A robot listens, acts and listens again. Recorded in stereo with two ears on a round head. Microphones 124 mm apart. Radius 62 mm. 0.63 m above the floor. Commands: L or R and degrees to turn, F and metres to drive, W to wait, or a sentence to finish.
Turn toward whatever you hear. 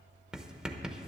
R30
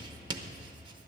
R145
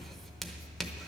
Found it: writing, straight ahead.